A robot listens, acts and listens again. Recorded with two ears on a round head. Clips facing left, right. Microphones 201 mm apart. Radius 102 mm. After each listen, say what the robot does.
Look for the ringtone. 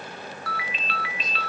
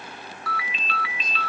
Turn 90° right.
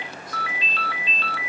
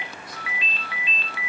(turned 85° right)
Turn 15° right.
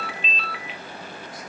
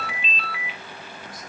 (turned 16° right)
Facing the ringtone.